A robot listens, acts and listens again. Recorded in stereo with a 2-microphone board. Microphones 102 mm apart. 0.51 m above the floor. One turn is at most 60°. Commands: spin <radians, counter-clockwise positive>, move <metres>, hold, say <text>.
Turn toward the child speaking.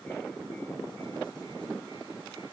hold
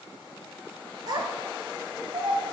spin -1.05
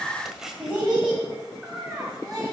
say Facing the child speaking.